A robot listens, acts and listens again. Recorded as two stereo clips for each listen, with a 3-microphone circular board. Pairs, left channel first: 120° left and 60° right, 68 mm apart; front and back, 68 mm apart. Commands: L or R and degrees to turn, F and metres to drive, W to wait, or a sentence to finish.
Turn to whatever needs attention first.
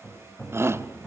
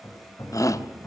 R20
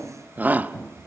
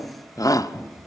Facing the shout.